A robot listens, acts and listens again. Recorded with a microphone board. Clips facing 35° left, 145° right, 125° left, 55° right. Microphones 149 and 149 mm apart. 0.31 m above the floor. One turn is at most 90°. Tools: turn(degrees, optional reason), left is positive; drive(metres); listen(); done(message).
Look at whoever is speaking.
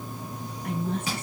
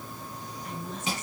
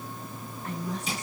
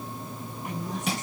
turn(degrees=15, reason="The woman speaking: 15° left.")
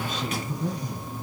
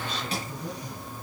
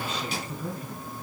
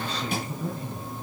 done("Found it: a woman speaking, straight ahead.")